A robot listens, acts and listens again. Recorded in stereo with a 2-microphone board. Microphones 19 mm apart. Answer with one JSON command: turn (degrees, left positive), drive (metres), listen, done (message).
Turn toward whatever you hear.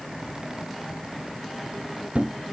{"turn": -90}
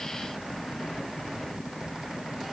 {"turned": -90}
{"done": "I heard a thud from this way, but can't make it out now."}